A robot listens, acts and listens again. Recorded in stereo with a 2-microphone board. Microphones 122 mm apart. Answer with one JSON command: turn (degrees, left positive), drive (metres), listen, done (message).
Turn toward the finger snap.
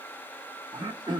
{"listen": true}
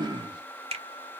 {"turn": -55}
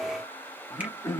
{"listen": true}
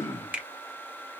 {"turn": -15}
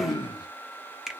{"done": "Found it: a finger snap, straight ahead, 1 to 2 m away."}